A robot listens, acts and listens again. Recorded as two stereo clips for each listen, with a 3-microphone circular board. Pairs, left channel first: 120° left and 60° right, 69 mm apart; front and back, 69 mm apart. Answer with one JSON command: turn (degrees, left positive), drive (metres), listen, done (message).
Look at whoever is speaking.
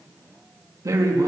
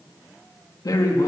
{"turn": -30}
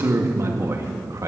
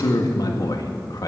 {"turn": -20}
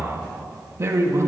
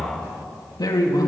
{"turn": -20}
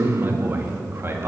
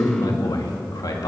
{"turn": -10}
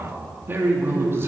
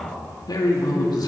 {"turn": -10}
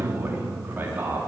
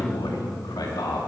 {"done": "Found it: a man speaking, straight ahead, 2 to 4 m away."}